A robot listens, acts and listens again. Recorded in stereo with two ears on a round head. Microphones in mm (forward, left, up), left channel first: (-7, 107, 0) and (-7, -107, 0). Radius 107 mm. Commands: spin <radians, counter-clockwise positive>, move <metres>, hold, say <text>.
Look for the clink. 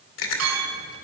spin -1.31
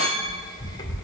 spin -0.44
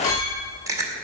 hold
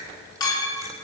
spin 0.26
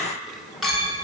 say Facing the clink, over 4 m away.